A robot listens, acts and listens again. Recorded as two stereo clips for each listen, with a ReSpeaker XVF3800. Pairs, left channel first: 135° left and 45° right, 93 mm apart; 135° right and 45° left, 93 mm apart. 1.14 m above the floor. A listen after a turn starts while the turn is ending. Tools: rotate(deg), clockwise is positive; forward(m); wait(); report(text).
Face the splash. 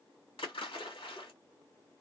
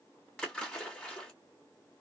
rotate(-145)
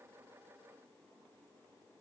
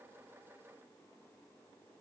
report("Facing where the splash came from. I can't hear it now.")